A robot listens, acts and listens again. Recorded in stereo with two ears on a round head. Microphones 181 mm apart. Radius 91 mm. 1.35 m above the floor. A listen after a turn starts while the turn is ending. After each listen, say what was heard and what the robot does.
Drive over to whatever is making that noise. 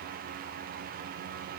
Keep listening.
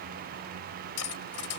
Turn 90° left.
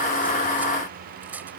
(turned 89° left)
So it is at 10° right. Turn 10° right.
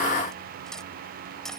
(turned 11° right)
Drive 1.0 m forward.
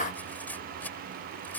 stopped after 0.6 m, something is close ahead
The cutlery clinking is now 10° left. Turn 10° left.
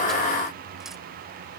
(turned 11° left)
Keep listening.
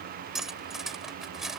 Blocked. The cutlery clinking is further on, straight ahead.